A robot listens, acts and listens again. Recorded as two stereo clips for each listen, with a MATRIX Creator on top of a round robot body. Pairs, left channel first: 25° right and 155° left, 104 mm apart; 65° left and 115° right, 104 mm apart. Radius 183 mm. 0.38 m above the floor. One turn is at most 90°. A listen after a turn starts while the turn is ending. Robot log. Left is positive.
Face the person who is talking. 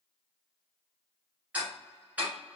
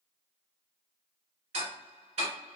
cmd idle
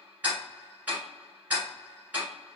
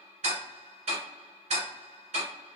cmd idle
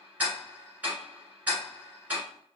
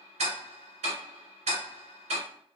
end: I can't make out anyone speaking to turn to.